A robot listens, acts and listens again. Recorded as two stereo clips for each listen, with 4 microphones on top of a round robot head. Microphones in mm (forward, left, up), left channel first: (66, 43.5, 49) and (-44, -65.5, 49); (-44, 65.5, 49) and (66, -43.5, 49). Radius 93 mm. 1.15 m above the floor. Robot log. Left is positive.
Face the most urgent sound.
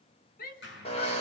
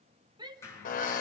note: The shout: 20° left.
cmd yaw +20
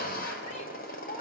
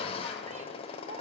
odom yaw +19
cmd idle
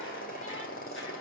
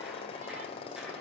cmd idle
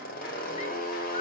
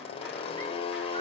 end: I heard a shout from this way, but can't make it out now.